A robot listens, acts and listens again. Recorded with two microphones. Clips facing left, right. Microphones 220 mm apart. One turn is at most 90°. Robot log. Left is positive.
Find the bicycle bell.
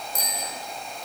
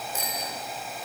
note: The bicycle bell: about 40° left or 140° left.
cmd yaw +40
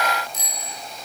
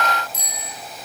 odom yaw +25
note: So it is at 15° left.
cmd yaw +15
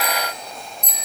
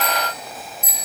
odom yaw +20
end: Facing the bicycle bell, over 4 m away.